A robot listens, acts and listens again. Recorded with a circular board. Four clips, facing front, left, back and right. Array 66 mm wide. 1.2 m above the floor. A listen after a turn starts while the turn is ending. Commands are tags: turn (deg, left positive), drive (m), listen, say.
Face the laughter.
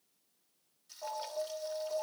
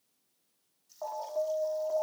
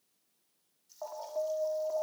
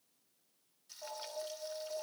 <listen/>
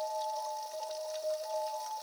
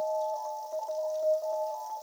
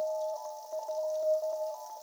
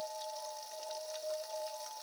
<listen/>
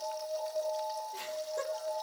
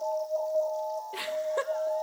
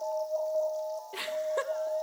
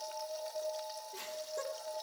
<turn deg="130"/>
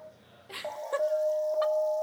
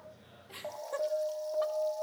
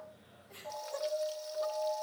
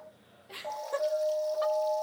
<turn deg="-10"/>
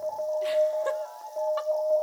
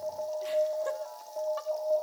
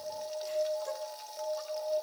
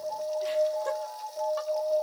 <listen/>
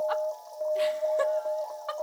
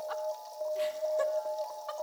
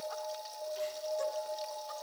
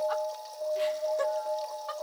<listen/>
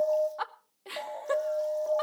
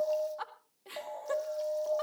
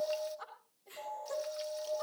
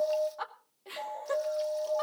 <say>Facing the laughter, 1 to 2 m away.</say>